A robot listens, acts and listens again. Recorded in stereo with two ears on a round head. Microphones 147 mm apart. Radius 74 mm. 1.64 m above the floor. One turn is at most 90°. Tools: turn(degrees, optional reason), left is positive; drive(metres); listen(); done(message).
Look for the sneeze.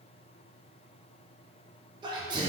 turn(degrees=-25, reason="The sneeze: about 25° right or 155° right.")
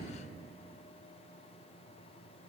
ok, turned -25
listen()
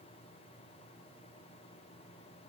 done("I heard a sneeze, but can't make it out now. It was about straight ahead or 130° right.")